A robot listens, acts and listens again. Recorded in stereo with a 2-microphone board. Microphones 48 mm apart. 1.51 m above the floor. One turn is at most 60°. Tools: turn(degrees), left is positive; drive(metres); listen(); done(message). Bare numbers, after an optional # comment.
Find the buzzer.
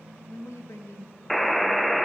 turn(30)
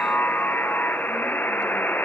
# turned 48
# So it is at 130° left.
turn(60)
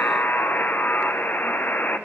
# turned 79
# The buzzer is now 45° left.
turn(45)
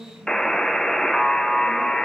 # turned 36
# The buzzer is now 10° left.
turn(10)
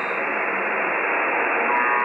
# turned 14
done("Facing the buzzer.")